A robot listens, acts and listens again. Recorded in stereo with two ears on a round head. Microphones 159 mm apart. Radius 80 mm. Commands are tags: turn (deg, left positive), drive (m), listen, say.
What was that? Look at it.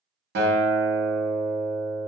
<turn deg="-60"/>
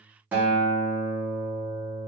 <turn deg="-10"/>
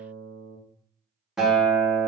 <say>Found it: a guitar, straight ahead, under 1 m away.</say>